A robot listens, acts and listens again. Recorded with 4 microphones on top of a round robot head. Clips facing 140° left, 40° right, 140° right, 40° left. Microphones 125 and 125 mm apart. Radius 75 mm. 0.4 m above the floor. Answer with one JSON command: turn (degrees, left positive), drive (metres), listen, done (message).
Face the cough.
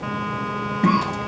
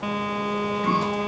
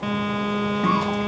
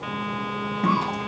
{"turn": 130}
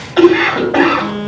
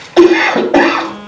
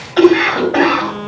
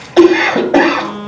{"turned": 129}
{"done": "Found it: a cough, straight ahead."}